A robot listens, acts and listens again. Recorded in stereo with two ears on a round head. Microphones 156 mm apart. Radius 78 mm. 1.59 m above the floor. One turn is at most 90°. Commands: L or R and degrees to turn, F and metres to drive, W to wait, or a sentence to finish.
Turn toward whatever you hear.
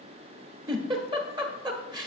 R25
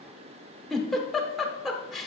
Found it: a giggle, straight ahead, 1 to 2 m away.